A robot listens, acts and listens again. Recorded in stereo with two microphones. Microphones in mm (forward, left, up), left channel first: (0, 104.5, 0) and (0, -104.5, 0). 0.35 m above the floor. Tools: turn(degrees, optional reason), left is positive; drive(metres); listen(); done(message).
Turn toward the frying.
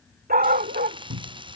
turn(degrees=-25, reason="The frying: about 25° right or 155° right.")
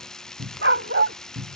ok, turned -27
done("Found it: frying, straight ahead.")